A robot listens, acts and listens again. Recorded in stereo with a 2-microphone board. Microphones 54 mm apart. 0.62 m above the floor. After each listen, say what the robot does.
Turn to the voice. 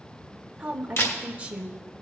Turn 20° right.
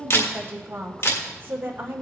Turn 135° right.
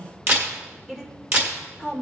Turn 10° right.
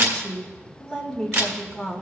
Facing the woman speaking.